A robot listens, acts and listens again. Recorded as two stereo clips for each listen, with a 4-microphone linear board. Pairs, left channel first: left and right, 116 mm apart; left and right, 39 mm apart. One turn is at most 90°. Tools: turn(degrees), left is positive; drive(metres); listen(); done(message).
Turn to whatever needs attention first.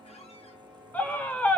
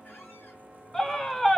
turn(degrees=15)
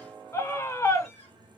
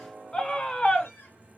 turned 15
turn(degrees=90)
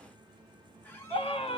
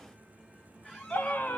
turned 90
turn(degrees=70)
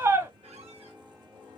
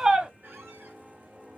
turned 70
turn(degrees=-30)
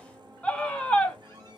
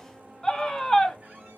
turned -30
turn(degrees=10)
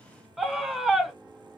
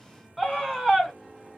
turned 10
done("Found it: a scream, straight ahead, 1 to 2 m away.")